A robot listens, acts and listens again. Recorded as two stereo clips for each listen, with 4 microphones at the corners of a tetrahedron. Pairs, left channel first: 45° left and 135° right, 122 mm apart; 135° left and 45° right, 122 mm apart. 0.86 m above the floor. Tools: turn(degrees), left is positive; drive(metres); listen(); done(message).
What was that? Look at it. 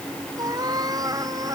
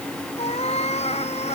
turn(degrees=165)
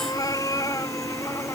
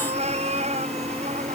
turn(degrees=-20)
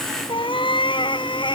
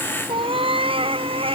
done("Found it: a cat meowing, straight ahead.")